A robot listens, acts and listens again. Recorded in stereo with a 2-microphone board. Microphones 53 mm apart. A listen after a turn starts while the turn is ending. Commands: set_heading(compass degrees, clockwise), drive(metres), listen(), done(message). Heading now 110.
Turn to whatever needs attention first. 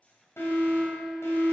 set_heading(55)
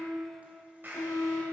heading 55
set_heading(350)
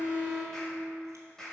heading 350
set_heading(335)
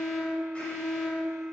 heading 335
done("Found it: an alarm, straight ahead.")